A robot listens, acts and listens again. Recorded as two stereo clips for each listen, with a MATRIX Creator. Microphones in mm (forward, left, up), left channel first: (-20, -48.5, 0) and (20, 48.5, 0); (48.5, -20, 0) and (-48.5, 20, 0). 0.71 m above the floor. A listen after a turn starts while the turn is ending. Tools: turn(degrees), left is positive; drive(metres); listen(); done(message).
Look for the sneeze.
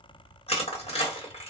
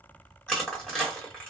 listen()
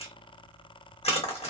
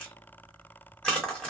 listen()
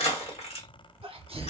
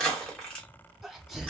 turn(degrees=70)
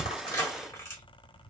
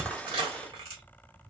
done("I heard a sneeze from this way, but can't make it out now.")